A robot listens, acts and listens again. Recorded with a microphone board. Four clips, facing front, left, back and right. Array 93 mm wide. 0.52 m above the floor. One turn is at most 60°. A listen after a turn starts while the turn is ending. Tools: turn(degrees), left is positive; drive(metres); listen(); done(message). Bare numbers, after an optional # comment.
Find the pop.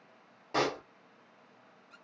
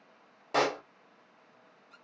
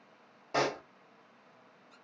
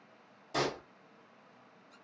# The pop: 85° left.
turn(60)
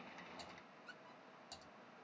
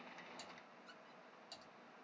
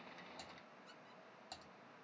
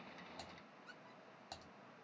# Nothing new. It was at 25° left.
turn(25)
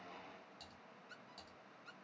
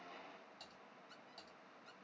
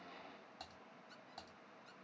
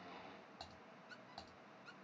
done("Facing where the pop came from. I can't hear it now.")